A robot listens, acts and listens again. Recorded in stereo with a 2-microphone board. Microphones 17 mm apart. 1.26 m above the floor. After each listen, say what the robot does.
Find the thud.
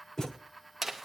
Turn 25° left.
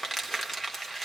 Keep listening.
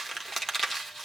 I heard a thud, but can't make it out now. It was about straight ahead or 130° left.